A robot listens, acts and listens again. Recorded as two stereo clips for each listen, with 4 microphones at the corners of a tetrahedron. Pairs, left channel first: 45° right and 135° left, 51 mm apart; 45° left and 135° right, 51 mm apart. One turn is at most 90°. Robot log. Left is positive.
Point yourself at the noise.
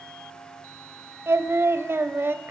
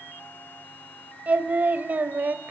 note: The singing: 175° left.
cmd yaw +90
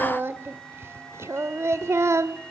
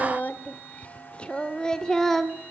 note: The singing is now 130° left.
cmd yaw +90
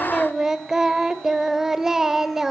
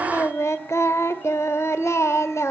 note: The singing is now 55° left.
cmd yaw +55
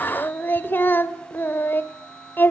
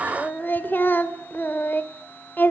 end: Found it: singing, straight ahead, 2 to 4 m away.